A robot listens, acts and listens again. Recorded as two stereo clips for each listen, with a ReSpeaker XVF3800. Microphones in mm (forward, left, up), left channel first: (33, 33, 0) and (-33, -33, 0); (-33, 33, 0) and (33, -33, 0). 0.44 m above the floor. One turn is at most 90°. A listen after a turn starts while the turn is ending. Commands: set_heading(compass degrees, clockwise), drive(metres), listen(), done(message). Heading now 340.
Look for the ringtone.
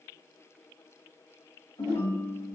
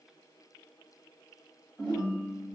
set_heading(300)
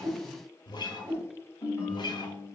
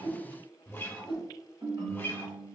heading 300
done("Facing the ringtone.")